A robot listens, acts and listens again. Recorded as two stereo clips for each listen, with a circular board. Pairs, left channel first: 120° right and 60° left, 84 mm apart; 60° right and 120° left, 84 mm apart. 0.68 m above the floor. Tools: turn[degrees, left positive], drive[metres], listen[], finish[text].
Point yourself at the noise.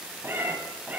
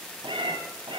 Thought: The cat meowing: 130° left.
Action: turn[130]
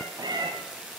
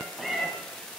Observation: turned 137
Thought: The cat meowing is now 30° left.
Action: turn[30]
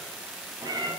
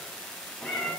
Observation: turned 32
Thought: The cat meowing is now 20° left.
Action: turn[20]
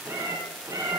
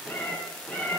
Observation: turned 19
Thought: The cat meowing is now 10° left.
Action: turn[10]
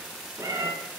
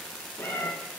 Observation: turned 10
Action: finish[Facing the cat meowing, 2 to 4 m away.]